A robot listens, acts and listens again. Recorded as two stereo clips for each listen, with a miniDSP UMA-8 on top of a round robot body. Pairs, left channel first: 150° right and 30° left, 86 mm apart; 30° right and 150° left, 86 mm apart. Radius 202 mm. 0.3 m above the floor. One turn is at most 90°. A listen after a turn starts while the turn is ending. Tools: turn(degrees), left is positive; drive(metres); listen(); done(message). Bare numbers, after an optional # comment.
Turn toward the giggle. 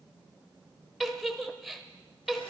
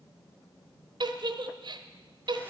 # The giggle: 120° left.
turn(90)
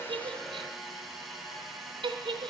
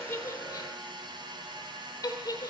# The giggle is now 20° left.
turn(20)
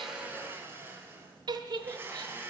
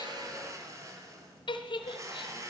done("Facing the giggle, 1 to 2 m away.")